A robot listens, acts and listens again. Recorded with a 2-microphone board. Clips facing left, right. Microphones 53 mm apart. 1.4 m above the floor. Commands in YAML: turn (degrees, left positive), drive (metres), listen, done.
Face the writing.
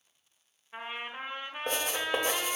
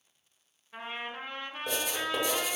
turn: 45
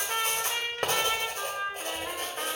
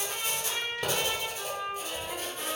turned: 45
turn: 75
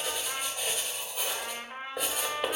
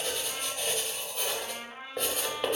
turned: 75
done: "Facing the writing."